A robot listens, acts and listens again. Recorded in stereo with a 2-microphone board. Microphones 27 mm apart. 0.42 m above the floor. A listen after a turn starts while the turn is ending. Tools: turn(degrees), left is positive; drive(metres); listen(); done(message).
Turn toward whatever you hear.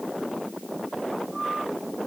listen()
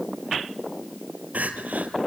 turn(degrees=-75)
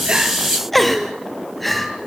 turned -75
done("Found it: crying, straight ahead, 1 to 2 m away.")